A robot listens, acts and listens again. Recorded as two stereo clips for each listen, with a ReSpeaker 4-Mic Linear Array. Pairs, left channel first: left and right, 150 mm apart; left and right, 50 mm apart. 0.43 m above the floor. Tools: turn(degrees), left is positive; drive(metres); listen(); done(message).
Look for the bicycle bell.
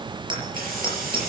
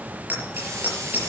turn(degrees=-35)
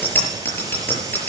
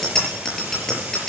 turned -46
turn(degrees=15)
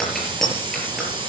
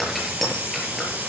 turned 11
done("Found it: a bicycle bell, straight ahead.")